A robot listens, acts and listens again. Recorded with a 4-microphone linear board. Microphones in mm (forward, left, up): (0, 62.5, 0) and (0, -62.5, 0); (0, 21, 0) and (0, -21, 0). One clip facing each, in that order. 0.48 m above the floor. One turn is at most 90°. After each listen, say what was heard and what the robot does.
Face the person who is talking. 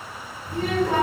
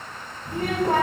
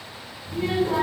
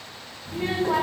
The child speaking: about 45° right or 135° right. Turn 45° right.
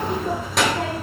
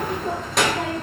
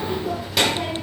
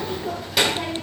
Facing the child speaking, 1 to 2 m away.